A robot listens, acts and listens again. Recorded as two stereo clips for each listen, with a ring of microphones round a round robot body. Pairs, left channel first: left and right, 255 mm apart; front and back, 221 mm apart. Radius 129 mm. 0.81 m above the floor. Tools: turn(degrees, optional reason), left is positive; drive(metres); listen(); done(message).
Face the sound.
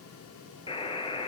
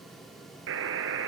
turn(degrees=160, reason="The buzzer: 160° left.")
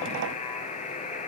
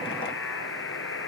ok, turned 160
turn(degrees=25, reason="The buzzer is now 25° left.")
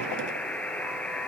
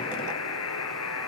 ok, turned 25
done("Facing the buzzer.")